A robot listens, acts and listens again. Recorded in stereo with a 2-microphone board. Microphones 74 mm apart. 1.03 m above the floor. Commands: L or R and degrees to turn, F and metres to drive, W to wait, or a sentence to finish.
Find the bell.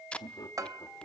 R50
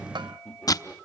R85
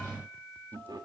W
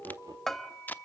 Found it: a bell, straight ahead, 1 to 2 m away.